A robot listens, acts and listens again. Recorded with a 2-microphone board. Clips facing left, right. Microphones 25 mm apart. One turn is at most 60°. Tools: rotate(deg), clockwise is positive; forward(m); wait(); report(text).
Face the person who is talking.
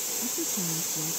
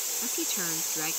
rotate(60)
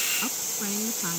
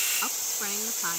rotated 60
rotate(20)
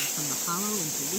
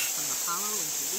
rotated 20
report("Facing the woman speaking.")